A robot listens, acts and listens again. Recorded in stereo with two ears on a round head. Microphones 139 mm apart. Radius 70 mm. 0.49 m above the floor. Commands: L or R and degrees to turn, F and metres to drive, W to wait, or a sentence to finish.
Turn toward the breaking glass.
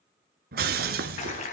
R70
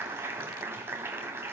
W
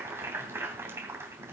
I heard breaking glass, but can't make it out now. It was about straight ahead or 40° right.